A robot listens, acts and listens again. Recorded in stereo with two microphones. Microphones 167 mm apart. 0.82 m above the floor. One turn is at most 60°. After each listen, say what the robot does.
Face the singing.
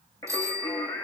Turn 15° left.
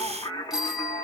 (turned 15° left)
Turn 20° left.
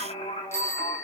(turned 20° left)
Turn 35° left.
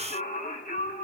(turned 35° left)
Turn 60° left.
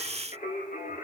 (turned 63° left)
Turn 55° left.
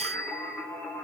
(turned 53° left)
Turn 10° left.
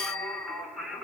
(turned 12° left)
Found it: singing, straight ahead.